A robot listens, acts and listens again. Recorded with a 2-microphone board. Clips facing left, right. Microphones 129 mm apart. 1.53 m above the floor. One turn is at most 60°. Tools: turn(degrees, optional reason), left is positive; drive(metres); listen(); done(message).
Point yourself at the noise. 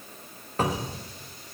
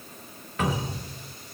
turn(degrees=35, reason="The cupboard door: about 35° left or 145° left.")
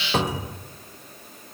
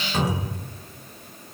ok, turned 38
turn(degrees=60, reason="So it is at 100° left.")
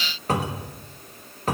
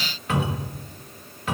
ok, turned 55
turn(degrees=45, reason="The cupboard door is now 45° left.")
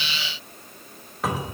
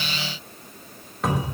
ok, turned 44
done("Facing the cupboard door, 1 to 2 m away.")